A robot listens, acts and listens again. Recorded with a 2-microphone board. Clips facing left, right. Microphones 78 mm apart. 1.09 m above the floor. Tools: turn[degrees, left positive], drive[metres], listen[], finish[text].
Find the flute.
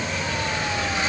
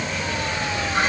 Action: listen[]
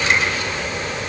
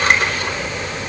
Action: listen[]
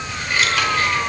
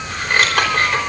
Action: finish[I can't make out a flute to turn to.]